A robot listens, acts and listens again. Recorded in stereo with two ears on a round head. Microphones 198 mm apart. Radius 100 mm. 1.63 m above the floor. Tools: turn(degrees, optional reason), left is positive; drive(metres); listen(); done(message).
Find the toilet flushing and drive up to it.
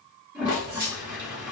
turn(degrees=-30)
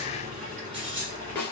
listen()
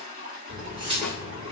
turn(degrees=-140, reason="So it is at 140° right.")
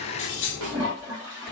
turn(degrees=-15, reason="The toilet flushing is now 15° right.")
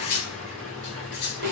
listen()
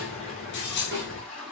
drive(metres=1.0)
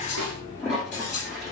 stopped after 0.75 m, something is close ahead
done("I am next to the toilet flushing.")